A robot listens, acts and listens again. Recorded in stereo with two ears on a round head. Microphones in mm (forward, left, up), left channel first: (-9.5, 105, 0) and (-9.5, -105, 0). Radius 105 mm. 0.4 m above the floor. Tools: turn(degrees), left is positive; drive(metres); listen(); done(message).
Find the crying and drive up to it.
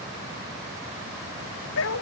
listen()
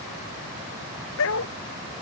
listen()
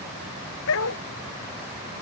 done("I can't make out crying to turn to.")